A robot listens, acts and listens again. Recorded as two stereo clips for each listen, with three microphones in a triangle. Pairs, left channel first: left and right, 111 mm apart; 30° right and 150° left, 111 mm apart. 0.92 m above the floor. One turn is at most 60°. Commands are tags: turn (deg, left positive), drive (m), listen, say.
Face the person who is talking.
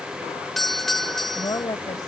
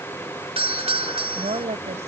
<turn deg="60"/>
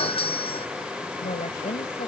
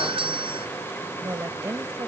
<turn deg="60"/>
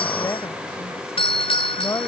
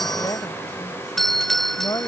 <turn deg="25"/>
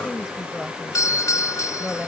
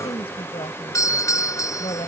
<say>Found it: a woman speaking, straight ahead.</say>